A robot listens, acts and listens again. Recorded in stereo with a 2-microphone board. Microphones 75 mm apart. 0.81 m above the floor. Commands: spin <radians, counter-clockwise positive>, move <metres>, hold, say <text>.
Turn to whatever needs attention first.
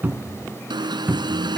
spin -1.57
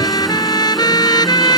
hold
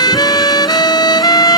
hold
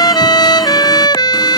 say Facing where the alarm came from. I can't hear it now.